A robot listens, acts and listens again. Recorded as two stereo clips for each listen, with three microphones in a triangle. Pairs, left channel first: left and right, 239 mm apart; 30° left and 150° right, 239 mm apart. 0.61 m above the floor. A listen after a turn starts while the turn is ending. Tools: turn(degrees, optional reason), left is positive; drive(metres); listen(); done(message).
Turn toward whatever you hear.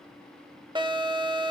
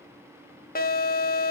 turn(degrees=-20, reason="The alarm: 20° right.")
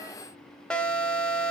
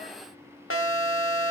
done("Facing the alarm, 1 to 2 m away.")